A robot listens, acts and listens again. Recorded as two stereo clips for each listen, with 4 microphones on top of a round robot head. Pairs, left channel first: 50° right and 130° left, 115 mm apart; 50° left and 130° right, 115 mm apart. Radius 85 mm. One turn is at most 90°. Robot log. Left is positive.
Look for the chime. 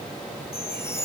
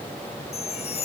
note: The chime: 20° left.
cmd yaw +20
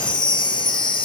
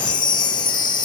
end: Facing the chime.